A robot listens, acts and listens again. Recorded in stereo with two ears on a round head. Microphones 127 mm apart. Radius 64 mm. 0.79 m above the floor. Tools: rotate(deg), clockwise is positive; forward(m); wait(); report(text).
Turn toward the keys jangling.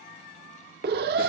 wait()
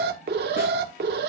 wait()
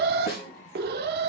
report("I can't make out keys jangling to turn to.")